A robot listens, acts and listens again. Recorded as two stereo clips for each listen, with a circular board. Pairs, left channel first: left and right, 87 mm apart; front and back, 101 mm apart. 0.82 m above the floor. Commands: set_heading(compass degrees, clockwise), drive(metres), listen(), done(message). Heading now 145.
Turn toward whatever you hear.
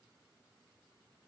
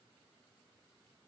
listen()
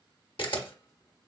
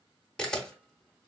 set_heading(65)
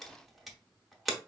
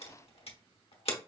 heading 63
done("Found it: a camera shutter, straight ahead.")